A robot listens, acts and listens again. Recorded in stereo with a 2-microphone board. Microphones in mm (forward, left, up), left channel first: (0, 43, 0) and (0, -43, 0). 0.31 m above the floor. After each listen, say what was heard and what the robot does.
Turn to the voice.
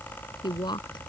The woman speaking: about 65° left or 115° left. Turn 65° left.
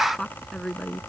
Found it: a woman speaking, straight ahead.